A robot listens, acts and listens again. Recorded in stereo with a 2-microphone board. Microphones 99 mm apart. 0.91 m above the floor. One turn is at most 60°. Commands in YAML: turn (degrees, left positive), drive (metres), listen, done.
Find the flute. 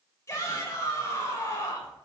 listen: true
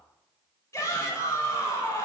listen: true
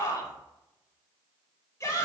done: "I can't make out a flute, only a shout."